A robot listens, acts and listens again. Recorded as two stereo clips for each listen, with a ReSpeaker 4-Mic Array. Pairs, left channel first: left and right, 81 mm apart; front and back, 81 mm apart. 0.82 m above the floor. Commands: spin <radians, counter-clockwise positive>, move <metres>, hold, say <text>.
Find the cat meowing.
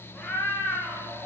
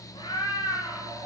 spin 0.52
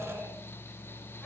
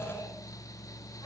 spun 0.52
hold
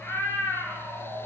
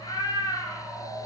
spin 0.44
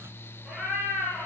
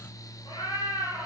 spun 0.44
say Found it: a cat meowing, straight ahead.